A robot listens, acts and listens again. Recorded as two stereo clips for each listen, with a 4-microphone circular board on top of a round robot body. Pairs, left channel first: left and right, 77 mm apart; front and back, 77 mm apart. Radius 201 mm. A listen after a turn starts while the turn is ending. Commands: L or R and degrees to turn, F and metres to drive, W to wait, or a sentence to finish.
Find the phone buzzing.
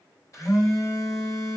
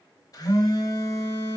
L40
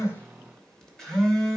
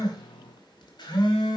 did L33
L10
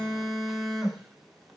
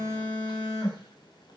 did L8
Found it: a phone buzzing, straight ahead.